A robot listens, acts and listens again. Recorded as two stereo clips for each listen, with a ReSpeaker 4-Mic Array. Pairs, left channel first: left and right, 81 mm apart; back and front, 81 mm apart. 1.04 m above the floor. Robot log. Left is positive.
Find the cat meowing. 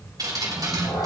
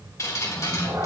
note: The cat meowing: 50° left.
cmd yaw +50
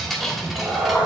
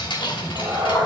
note: The cat meowing is now 10° right.
cmd yaw -10
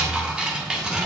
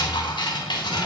cmd idle
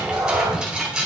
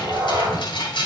note: The cat meowing is now 15° right.
cmd yaw -15
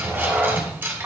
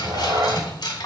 note: The cat meowing is now 15° right.
cmd yaw -15
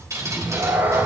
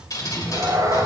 note: The cat meowing is now 35° right.
cmd yaw -35
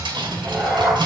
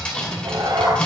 end: Found it: a cat meowing, straight ahead, 1 to 2 m away.